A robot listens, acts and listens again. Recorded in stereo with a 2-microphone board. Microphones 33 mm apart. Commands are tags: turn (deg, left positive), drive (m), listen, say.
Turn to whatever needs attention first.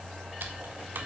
<listen/>
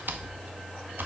<listen/>
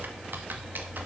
<say>I can't make out anything urgent to turn to.</say>